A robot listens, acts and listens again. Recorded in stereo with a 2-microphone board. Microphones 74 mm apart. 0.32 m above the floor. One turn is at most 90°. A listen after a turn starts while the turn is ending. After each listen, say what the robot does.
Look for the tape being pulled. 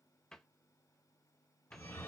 Keep listening.
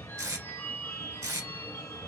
Turn 50° right.
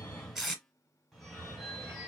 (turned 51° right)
Found it: tape being pulled, straight ahead.